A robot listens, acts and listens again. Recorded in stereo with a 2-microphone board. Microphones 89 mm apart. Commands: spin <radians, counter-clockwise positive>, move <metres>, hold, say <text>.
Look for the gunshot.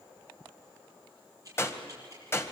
spin 0.52
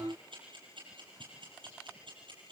hold
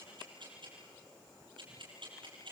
say I heard a gunshot, but can't make it out now. It was about straight ahead or 120° left.